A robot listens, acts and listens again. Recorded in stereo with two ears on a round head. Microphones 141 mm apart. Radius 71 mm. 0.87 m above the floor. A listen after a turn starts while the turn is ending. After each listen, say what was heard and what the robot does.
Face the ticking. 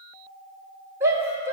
Keep listening.
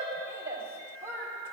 Keep listening.
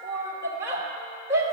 I can't make out ticking, only a shout.